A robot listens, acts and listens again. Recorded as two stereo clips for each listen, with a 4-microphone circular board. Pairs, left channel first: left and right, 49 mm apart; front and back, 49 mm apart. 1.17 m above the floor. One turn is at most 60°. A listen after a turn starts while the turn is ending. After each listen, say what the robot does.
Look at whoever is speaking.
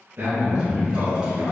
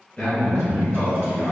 Turn 60° right.
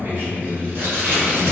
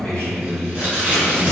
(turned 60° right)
Turn 35° right.
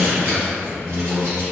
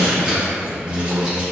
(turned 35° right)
Turn 20° right.
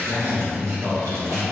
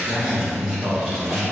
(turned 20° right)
Facing the man speaking.